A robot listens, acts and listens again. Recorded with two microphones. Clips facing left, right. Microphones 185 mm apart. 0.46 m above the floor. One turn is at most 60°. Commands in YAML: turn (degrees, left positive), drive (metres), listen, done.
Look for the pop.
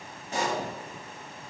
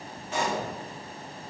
turn: 40
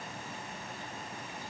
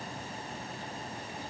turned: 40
listen: true
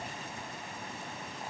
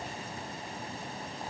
done: "I heard a pop, but can't make it out now. It was about straight ahead or 100° left."